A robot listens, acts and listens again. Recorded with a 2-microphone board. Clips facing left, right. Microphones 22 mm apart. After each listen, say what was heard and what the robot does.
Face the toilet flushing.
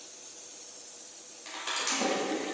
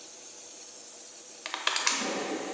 The toilet flushing: about 60° left or 120° left. Turn 60° left.
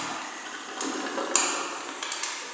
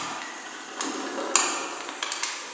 So it is at 15° left. Turn 15° left.
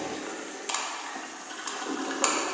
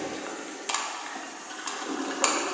Found it: a toilet flushing, straight ahead.